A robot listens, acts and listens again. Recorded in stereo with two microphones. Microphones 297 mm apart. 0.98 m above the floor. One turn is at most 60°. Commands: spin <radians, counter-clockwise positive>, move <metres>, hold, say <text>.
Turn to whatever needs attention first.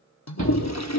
spin -1.05
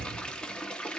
spin -0.52
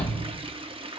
say Found it: a shout, straight ahead, over 4 m away.